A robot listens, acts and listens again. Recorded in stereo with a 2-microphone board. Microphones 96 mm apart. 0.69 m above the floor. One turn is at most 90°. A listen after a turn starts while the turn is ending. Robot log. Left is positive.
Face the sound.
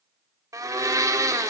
note: The blender: about 35° right or 145° right.
cmd yaw -35
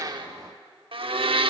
note: So it is at 110° right.
cmd yaw -90
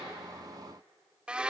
note: The blender is now 10° right.
cmd yaw -10
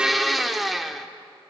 end: Found it: a blender, straight ahead.